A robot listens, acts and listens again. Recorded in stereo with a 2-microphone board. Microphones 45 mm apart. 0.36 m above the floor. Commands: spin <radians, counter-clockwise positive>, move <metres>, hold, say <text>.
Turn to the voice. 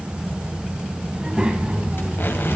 spin -0.52
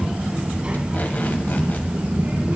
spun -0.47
spin -0.70
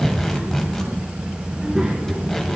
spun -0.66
spin -0.26
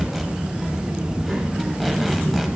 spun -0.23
say Facing the child speaking.